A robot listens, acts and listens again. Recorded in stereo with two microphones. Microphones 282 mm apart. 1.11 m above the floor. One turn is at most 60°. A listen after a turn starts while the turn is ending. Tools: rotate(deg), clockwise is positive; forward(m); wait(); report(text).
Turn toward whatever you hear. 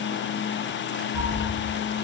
rotate(-40)
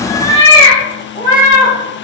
rotate(-30)
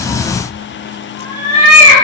rotate(-20)
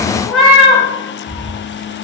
report("Facing the cat meowing.")